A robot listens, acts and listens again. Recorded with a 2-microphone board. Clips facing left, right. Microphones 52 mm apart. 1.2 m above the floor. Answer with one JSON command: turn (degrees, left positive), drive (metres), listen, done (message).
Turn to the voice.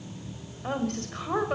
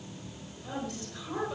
{"turn": 55}
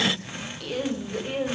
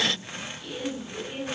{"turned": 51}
{"turn": 75}
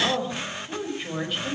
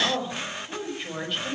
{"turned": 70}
{"done": "Facing the woman speaking."}